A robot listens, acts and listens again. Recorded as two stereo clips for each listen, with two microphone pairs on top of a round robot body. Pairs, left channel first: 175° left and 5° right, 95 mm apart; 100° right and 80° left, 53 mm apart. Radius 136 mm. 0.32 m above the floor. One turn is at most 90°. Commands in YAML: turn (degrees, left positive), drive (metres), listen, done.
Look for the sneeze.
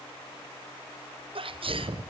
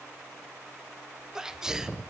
done: "Facing the sneeze, 1 to 2 m away."